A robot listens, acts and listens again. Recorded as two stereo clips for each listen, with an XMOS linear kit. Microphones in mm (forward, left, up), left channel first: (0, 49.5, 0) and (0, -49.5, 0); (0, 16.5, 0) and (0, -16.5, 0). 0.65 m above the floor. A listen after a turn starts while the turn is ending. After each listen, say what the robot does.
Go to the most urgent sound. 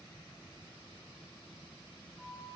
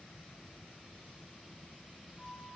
Keep listening.
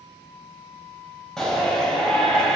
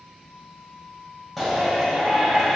Turn 30° left.
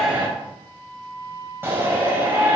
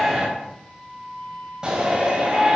Turn 20° right.
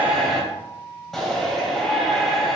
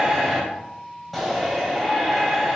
Drive 1.0 m forward.
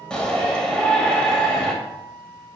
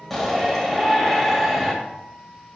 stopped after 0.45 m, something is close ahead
Turn 10° left.
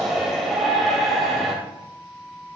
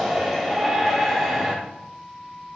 Something is in my way. I am facing the shout but have not reached it.